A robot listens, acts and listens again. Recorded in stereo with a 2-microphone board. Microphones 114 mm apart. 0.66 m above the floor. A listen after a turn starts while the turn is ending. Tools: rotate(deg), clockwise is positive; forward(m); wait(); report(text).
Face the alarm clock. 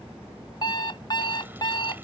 rotate(-45)
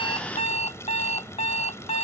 rotate(-90)
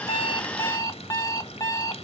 rotate(-30)
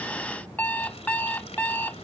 rotate(-15)
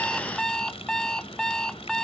report("Facing the alarm clock.")